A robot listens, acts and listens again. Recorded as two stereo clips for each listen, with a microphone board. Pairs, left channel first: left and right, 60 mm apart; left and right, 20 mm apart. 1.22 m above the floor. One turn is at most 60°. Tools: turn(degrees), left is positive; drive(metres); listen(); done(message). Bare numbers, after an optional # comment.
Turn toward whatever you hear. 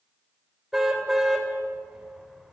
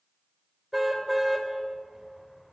turn(-30)
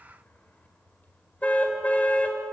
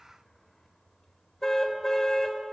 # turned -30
# So it is at 25° left.
turn(25)
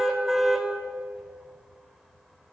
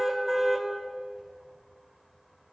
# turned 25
done("Facing the car horn.")